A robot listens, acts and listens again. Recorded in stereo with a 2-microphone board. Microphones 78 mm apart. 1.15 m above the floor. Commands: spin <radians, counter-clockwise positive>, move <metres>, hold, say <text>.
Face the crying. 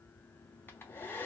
hold
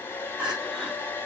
spin -0.52
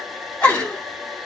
spin 0.35
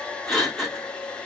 say Found it: crying, straight ahead, 1 to 2 m away.